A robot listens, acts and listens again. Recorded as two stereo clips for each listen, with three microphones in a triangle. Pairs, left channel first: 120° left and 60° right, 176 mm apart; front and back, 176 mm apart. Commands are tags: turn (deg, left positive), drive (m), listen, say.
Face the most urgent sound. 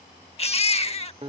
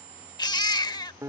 <turn deg="65"/>
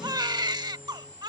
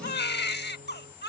<turn deg="10"/>
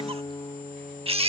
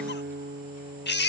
<say>Facing the baby crying.</say>